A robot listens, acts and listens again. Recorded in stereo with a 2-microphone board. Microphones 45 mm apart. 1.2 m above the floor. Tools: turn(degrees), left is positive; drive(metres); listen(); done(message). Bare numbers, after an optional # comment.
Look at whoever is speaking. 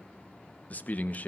# The man speaking: about 40° left or 140° left.
turn(40)
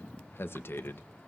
# So it is at 100° left.
turn(100)
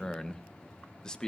# The man speaking is now 20° left.
turn(20)
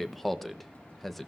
done("Found it: a man speaking, straight ahead.")